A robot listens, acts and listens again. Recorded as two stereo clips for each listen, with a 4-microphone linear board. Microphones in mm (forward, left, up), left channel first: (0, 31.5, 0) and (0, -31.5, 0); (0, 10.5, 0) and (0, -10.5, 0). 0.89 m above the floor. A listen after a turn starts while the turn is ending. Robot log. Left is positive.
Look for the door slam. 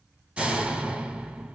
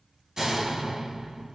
note: The door slam: about 20° right or 160° right.
cmd yaw -20
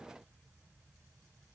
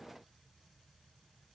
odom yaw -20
cmd idle
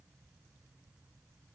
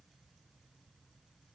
end: I heard a door slam, but can't make it out now. It was about straight ahead or 140° right.